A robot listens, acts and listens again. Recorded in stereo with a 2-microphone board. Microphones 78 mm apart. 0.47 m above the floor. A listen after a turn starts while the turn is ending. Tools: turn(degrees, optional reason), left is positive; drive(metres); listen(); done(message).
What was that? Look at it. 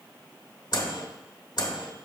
turn(degrees=65, reason="The microwave: about 65° left or 115° left.")
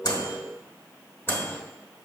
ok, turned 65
turn(degrees=30, reason="So it is at 30° left.")
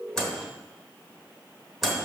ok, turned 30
done("Found it: a microwave, straight ahead, 1 to 2 m away.")